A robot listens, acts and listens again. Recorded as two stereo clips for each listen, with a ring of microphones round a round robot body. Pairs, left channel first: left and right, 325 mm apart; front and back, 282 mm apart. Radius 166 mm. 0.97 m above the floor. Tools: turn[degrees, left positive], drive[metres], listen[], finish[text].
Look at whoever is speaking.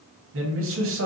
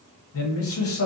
Thought: The man speaking: 40° right.
Action: turn[-40]
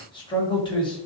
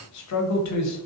Thought: The man speaking is now 15° left.
Action: turn[15]
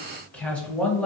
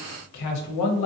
Action: finish[Found it: a man speaking, straight ahead.]